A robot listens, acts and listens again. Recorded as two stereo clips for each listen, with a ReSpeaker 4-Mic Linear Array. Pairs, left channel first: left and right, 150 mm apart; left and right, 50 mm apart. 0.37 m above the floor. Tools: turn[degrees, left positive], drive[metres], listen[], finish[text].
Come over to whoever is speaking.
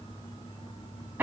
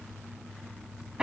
Action: listen[]
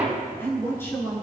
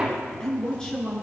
Action: turn[30]
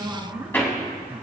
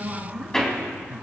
Thought: So it is at 15° right.
Action: turn[-15]
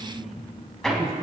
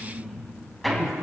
Action: drive[1.0]
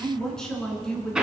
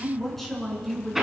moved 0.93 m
Action: drive[1.0]
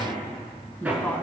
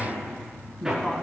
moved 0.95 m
Thought: The woman speaking is now 10° left.
Action: turn[10]
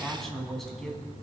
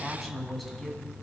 Action: drive[1.0]
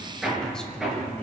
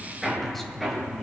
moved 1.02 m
Action: listen[]
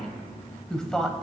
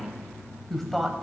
Action: drive[1.0]
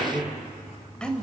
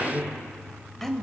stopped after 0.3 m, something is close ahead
Action: finish[Arrived at the woman speaking, straight ahead.]